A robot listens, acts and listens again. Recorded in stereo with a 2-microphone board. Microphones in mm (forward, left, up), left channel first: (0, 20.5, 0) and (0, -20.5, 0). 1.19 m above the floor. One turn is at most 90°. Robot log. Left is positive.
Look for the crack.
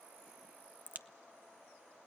note: The crack: about 45° right or 135° right.
cmd yaw -45
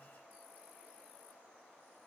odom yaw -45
cmd idle
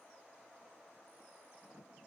end: I heard a crack, but can't make it out now. It was about straight ahead or 90° right.